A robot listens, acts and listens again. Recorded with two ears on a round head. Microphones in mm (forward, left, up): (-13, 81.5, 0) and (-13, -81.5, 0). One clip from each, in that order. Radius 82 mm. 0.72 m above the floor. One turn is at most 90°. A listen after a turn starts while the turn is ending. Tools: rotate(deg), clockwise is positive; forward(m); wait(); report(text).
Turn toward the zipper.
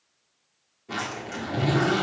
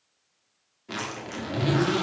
rotate(25)
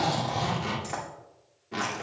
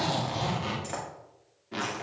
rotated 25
report("Found it: a zipper, straight ahead, 1 to 2 m away.")